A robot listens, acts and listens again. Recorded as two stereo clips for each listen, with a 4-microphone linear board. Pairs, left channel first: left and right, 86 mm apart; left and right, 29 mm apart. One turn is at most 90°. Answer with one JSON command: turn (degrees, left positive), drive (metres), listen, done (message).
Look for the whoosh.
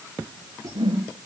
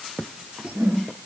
{"turn": -90}
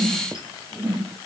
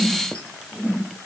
{"done": "Found it: a whoosh, straight ahead."}